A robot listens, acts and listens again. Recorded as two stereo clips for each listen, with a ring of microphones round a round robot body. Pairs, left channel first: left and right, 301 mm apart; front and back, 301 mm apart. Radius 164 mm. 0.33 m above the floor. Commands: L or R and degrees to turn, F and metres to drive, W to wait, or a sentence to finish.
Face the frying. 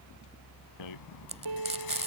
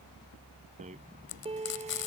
R20
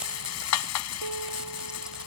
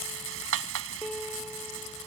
W
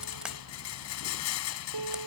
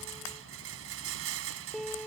W
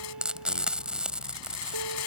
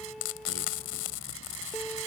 Found it: frying, straight ahead.